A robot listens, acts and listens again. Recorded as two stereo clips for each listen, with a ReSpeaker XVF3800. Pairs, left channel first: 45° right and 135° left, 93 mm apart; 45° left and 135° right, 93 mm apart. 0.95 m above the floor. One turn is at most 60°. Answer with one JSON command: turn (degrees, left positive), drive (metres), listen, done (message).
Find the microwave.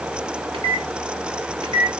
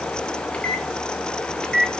{"turn": 60}
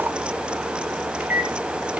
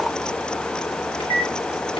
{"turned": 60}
{"turn": 60}
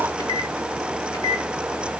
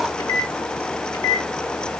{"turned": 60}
{"done": "Found it: a microwave, straight ahead."}